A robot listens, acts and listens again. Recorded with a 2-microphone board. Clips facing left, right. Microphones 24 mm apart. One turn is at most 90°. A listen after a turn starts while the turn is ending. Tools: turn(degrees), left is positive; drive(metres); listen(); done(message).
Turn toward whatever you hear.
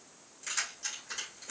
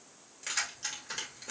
turn(degrees=-35)
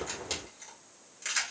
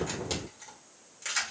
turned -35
done("Facing the keys jangling.")